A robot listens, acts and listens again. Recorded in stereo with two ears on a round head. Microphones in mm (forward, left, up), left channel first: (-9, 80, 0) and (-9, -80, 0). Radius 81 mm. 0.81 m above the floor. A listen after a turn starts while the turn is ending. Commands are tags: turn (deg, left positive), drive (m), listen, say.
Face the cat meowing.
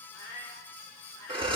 <turn deg="20"/>
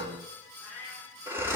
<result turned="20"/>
<turn deg="30"/>
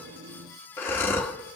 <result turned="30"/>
<listen/>
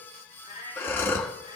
<turn deg="-25"/>
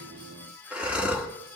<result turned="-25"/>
<listen/>
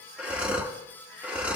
<listen/>
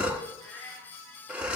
<say>Facing the cat meowing, over 4 m away.</say>